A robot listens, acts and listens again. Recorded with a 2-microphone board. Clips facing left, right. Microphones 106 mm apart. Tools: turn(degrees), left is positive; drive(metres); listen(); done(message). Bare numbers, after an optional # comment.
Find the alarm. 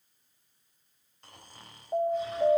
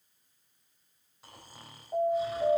# The alarm: about 25° left or 155° left.
turn(25)
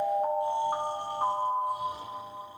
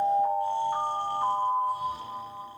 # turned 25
# So it is at 130° left.
turn(130)
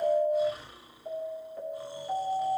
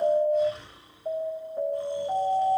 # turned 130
# The alarm is now 25° right.
turn(-25)
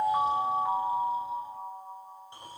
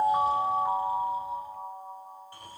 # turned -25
done("Facing the alarm, over 4 m away.")